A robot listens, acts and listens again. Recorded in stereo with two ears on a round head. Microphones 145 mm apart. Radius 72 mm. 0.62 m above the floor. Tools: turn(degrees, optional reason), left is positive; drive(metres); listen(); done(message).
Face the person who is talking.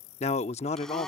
turn(degrees=40, reason="The man speaking: about 40° left or 140° left.")
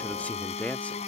turn(degrees=10, reason="So it is at 10° left.")
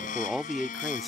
done("Facing the man speaking.")